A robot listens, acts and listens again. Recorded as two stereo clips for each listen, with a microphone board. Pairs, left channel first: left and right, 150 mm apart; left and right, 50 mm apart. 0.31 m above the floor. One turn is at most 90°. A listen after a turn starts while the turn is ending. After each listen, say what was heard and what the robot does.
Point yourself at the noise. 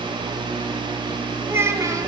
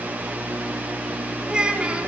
The child speaking: about 20° right or 160° right. Turn 20° right.
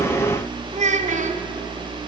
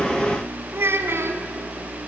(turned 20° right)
So it is at 125° right. Turn 90° right.
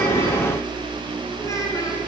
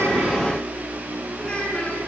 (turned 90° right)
Nothing new. It was at 35° right. Turn 35° right.
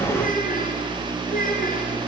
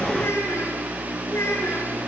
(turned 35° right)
The child speaking is now 70° left. Turn 70° left.
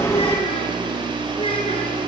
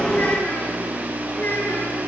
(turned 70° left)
Keep listening.
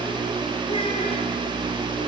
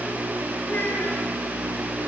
Keep listening.
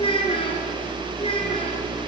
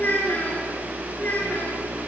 The child speaking is now 35° left. Turn 35° left.
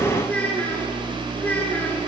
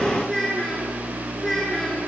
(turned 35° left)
The child speaking is now 10° left. Turn 10° left.
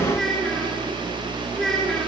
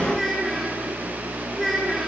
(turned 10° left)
Facing the child speaking.